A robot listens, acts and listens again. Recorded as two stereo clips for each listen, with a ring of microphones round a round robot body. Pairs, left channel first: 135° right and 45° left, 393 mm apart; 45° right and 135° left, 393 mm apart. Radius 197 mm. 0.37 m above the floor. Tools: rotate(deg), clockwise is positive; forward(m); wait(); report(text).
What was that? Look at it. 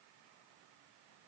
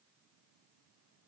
wait()
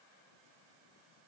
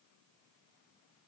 wait()
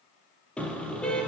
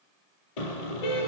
rotate(50)
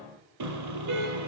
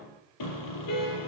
report("Facing the car horn, over 4 m away.")